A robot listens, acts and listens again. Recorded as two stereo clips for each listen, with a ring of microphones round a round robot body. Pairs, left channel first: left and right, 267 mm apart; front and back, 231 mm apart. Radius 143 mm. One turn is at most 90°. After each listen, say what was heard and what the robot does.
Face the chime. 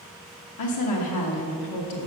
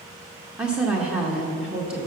Keep listening.
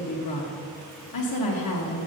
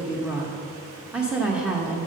Keep listening.
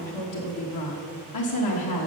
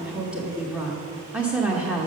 I can't make out a chime, only a woman speaking.